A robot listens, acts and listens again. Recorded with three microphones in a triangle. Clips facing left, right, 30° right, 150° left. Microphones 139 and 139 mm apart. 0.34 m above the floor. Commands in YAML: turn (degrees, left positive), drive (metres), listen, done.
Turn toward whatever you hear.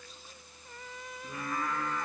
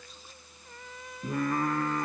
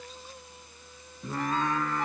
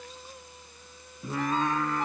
turn: -125
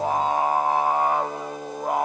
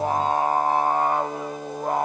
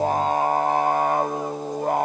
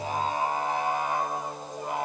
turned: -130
done: "Found it: singing, straight ahead."